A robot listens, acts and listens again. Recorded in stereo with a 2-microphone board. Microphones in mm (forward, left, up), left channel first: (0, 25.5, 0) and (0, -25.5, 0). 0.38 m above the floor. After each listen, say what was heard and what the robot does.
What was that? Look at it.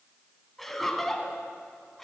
Turn 30° left.
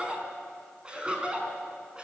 So it is at 20° right. Turn 20° right.
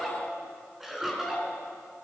Facing the laughter.